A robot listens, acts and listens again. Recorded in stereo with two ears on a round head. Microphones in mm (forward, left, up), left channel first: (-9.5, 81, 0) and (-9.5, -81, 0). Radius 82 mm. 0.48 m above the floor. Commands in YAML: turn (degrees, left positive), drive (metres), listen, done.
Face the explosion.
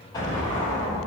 turn: 25
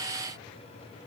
listen: true
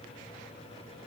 done: "I heard an explosion, but can't make it out now. It was about straight ahead or 130° left."